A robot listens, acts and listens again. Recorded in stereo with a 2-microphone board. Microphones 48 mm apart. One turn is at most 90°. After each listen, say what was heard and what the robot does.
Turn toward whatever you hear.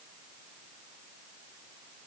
Keep listening.
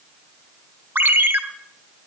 The ringtone: about 45° right or 135° right. Turn 45° right.
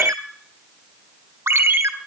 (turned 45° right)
So it is at 85° right. Turn 85° right.
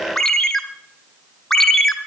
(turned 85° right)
The ringtone is now 10° left. Turn 10° left.
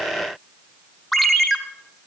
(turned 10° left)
Found it: a ringtone, straight ahead, 1 to 2 m away.